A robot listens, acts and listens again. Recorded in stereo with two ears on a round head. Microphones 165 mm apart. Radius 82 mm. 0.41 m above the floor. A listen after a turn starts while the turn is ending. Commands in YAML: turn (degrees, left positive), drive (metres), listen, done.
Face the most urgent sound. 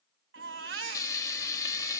turn: -70
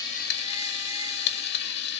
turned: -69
listen: true
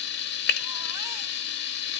listen: true
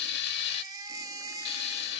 turn: -20
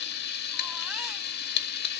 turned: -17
listen: true
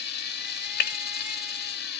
listen: true
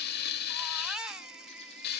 done: "Found it: a baby crying, straight ahead."